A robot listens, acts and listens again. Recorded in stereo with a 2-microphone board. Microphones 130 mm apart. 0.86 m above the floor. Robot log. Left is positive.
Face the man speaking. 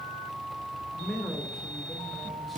cmd yaw +30
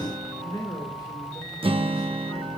note: So it is at 150° left.
cmd yaw +150
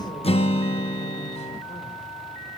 cmd idle
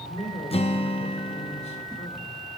note: The man speaking is now 55° left.
cmd yaw +55
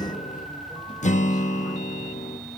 cmd idle
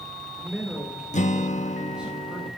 end: Facing the man speaking.